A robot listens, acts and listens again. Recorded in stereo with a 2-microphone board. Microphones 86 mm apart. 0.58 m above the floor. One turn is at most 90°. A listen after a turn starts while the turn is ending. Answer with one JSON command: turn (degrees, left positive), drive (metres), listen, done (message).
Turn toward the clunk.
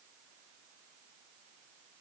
{"listen": true}
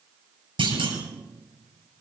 {"turn": -90}
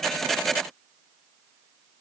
{"done": "I heard a clunk from this way, but can't make it out now."}